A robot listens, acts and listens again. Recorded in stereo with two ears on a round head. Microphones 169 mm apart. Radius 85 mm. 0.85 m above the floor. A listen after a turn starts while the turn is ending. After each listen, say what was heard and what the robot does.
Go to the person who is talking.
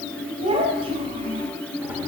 The child speaking: about 30° right or 150° right. Turn 30° right.
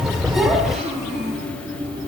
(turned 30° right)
Drive 1.0 m forward.
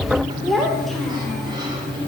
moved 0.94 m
Drive 1.0 m forward.
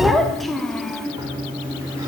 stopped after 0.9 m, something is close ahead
I am next to the child speaking.